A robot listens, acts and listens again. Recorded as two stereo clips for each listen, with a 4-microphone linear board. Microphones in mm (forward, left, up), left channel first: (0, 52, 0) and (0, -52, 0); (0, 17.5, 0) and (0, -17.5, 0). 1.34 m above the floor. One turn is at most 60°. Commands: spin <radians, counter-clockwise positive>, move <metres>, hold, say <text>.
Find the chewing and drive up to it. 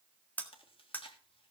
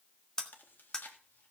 spin 1.05
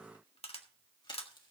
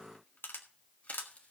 hold
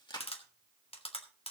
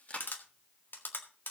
spin 0.87
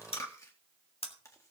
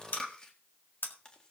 spin 0.52
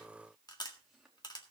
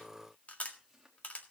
hold
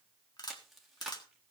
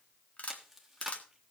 move 1.0
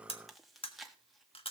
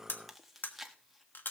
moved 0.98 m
move 1.0
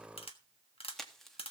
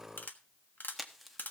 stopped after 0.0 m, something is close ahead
say I am next to the chewing.